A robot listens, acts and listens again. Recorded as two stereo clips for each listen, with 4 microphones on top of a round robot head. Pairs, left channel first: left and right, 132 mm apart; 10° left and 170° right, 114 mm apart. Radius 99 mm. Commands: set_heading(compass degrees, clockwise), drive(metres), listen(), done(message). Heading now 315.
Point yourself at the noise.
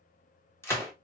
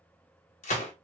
set_heading(295)
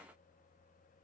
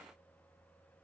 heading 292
done("Facing where the gunshot came from. I can't hear it now.")